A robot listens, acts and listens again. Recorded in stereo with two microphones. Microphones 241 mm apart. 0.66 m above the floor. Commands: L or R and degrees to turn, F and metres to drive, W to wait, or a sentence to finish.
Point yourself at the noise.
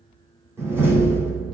R30
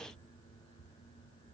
W
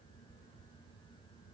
I heard a door slam, but can't make it out now. It was about 20° left or 140° right.